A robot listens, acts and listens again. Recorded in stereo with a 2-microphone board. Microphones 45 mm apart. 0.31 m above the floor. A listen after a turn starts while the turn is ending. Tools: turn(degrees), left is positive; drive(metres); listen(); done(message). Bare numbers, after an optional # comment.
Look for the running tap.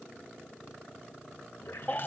# The running tap: about 50° left or 130° left.
turn(50)
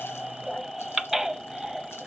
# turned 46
listen()
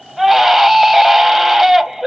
listen()
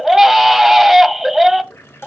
# So it is at 80° left.
turn(80)
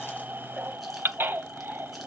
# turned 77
listen()
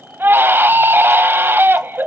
listen()
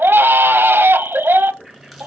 done("Facing the running tap, 2 to 4 m away.")